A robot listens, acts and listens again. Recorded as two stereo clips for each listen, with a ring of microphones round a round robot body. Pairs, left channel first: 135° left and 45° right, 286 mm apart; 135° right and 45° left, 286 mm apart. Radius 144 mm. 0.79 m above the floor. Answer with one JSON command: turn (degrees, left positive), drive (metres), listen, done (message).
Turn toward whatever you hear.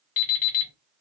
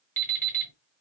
{"turn": 140}
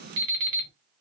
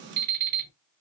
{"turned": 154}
{"turn": -10}
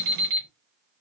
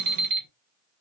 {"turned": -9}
{"done": "Found it: an alarm clock, straight ahead."}